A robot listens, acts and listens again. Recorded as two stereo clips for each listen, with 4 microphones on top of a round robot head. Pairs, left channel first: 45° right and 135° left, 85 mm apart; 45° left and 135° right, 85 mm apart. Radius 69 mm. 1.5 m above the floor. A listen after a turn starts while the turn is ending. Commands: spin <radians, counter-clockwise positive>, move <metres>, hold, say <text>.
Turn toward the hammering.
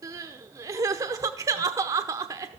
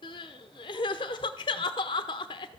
hold
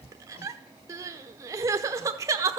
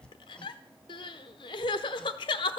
spin -0.61
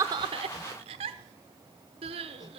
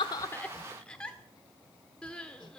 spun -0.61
hold
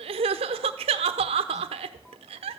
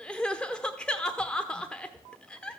hold
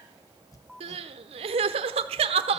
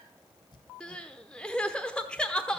say Facing the hammering.